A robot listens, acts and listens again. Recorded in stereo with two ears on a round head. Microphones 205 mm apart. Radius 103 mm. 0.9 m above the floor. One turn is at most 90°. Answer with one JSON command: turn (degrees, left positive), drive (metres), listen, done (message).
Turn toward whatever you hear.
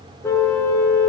{"turn": 30}
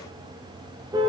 {"turn": -20}
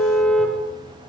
{"done": "Found it: a car horn, straight ahead, over 4 m away."}